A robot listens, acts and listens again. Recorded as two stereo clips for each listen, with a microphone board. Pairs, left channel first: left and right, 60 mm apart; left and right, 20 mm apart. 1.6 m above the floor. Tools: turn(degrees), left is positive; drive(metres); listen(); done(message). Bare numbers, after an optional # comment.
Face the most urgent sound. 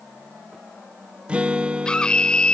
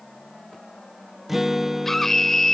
turn(30)
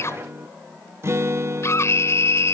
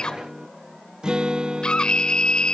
# So it is at 135° left.
turn(135)
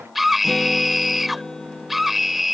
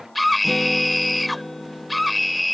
done("Found it: a scream, straight ahead.")